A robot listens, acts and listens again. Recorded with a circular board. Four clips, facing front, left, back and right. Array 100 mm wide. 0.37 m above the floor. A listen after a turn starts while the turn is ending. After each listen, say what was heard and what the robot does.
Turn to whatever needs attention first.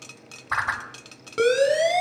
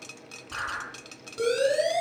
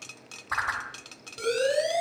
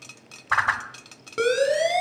The siren: 45° right. Turn 45° right.
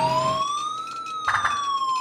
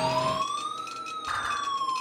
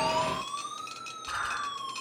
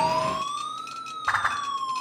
Facing the siren.